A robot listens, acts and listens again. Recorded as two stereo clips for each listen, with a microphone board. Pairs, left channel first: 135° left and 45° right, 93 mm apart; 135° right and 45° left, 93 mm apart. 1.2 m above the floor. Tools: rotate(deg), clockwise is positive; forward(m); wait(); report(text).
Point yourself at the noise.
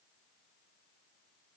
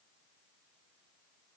wait()
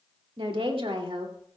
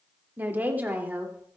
rotate(30)
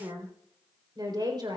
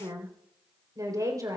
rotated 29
report("Facing the woman speaking.")